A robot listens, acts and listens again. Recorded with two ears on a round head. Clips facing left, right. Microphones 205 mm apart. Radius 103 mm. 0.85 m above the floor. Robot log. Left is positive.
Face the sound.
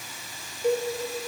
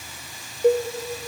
note: The cowbell: about 40° right or 140° right.
cmd yaw -40
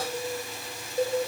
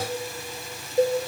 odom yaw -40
note: So it is at 105° right.
cmd yaw -105
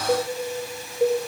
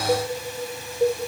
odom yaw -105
end: Found it: a cowbell, straight ahead.